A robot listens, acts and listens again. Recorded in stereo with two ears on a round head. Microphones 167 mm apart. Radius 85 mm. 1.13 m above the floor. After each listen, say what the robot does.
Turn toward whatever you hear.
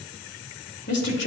Turn 65° left.
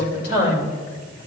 Turn 60° left.
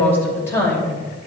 Turn 15° left.
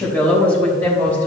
Turn 10° left.
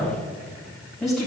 Facing the woman speaking, 2 to 4 m away.